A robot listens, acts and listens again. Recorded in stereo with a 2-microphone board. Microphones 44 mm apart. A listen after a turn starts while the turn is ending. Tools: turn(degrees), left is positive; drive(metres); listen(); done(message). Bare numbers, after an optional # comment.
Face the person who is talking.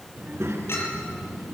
# The child speaking: about 75° right or 105° right.
turn(-75)
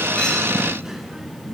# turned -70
# So it is at 15° right.
turn(-15)
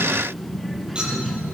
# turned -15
done("Facing the child speaking.")